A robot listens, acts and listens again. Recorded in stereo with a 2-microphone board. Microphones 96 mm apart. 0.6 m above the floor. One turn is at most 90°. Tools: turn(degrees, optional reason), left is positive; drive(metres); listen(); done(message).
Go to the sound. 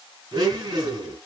turn(degrees=-50, reason="The blender: about 50° right or 130° right.")
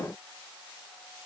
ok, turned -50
listen()
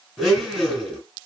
drive(metres=1.0)
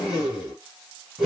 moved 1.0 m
turn(degrees=-10, reason="The blender is now 10° right.")
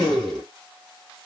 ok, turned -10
drive(metres=1.0)
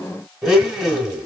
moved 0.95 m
drive(metres=1.0)
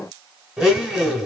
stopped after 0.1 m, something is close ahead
done("I am next to the blender.")